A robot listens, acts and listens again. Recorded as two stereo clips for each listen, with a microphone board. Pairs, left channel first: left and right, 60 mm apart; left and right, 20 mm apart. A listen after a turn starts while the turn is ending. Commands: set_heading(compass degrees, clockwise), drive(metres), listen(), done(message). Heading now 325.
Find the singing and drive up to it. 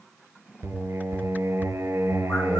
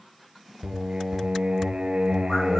set_heading(10)
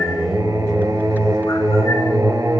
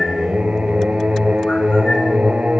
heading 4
set_heading(99)
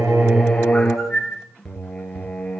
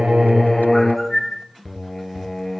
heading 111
set_heading(101)
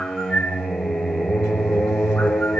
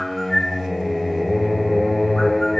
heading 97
drive(1.0)
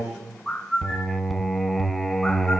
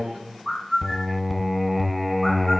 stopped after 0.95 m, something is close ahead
done("I am next to the singing.")